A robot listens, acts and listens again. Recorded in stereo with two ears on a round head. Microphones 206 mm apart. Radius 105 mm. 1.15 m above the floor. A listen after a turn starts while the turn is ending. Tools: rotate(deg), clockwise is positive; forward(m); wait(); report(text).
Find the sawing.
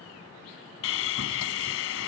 rotate(-60)
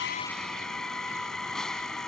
report("Found it: sawing, straight ahead.")